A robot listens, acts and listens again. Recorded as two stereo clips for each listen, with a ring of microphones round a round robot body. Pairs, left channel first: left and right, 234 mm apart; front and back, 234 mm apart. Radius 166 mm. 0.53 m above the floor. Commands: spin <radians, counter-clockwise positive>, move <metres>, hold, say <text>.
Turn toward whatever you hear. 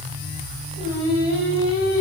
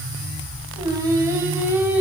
spin 1.66
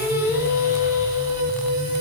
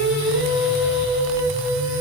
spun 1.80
spin -0.26
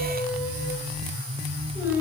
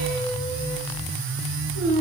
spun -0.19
say Facing the singing, over 4 m away.